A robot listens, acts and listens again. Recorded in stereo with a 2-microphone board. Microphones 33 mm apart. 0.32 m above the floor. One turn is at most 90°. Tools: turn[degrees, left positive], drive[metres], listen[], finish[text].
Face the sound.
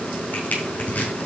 Thought: The crushing: about 65° left or 115° left.
Action: turn[65]
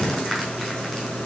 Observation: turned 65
Action: listen[]
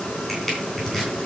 Action: finish[Facing the crushing, over 4 m away.]